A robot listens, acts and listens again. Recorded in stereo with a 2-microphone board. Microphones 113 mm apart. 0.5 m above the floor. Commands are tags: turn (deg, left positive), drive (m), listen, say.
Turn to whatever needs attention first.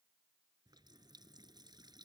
<listen/>
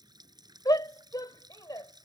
<turn deg="35"/>
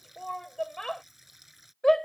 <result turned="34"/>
<say>Found it: a shout, straight ahead.</say>